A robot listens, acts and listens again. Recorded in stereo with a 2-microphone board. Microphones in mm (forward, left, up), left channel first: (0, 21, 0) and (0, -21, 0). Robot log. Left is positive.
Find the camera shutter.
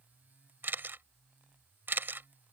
note: The camera shutter: about 55° right or 125° right.
cmd yaw -55
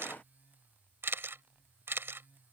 note: So it is at 70° right.
cmd yaw -70
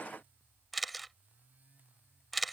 end: Facing the camera shutter.